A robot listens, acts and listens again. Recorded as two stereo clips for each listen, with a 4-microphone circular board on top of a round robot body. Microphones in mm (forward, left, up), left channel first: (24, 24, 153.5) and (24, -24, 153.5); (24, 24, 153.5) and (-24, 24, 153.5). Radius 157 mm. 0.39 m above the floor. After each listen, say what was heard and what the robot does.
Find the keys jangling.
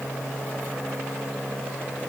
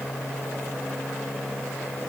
Keep listening.
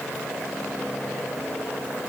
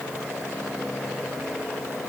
Keep listening.
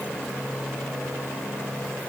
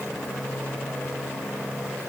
I can't make out keys jangling.